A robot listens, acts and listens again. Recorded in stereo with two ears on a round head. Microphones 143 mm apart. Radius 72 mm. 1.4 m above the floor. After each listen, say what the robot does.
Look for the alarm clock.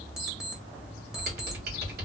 Turn 30° right.
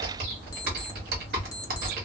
Keep listening.
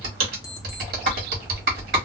Keep listening.
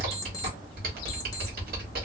I heard an alarm clock, but can't make it out now. It was about 25° left or 145° right.